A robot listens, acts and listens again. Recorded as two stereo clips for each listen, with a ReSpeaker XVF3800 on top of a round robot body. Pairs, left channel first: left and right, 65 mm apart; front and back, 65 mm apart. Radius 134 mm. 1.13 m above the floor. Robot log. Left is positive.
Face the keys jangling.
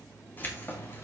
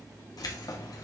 note: The keys jangling: 35° left.
cmd yaw +35
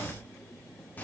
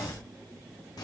note: The keys jangling is now 25° left.
cmd yaw +25
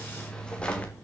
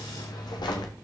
note: The keys jangling is now 20° left.
cmd yaw +20
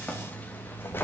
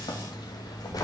note: The keys jangling is now 35° left.
cmd yaw +35
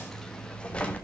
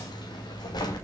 note: The keys jangling is now 20° left.
cmd yaw +20
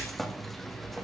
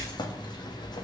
end: Facing the keys jangling, 1 to 2 m away.